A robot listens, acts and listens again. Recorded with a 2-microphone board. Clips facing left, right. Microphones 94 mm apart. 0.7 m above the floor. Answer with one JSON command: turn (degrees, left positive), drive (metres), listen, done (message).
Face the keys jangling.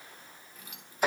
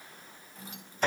{"turn": -35}
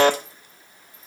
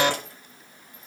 {"listen": true}
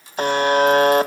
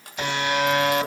{"turn": -115}
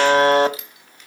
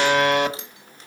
{"turn": -35}
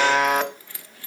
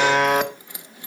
{"turn": -20}
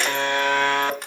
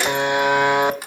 {"done": "Found it: keys jangling, straight ahead, 1 to 2 m away."}